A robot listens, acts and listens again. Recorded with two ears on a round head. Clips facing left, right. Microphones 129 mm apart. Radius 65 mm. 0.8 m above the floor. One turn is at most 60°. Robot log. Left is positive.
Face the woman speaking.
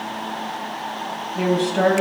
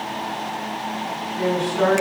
cmd yaw +60
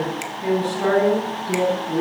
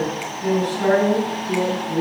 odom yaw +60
note: So it is at 25° left.
cmd yaw +25
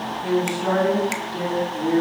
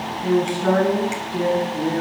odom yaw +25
end: Found it: a woman speaking, straight ahead.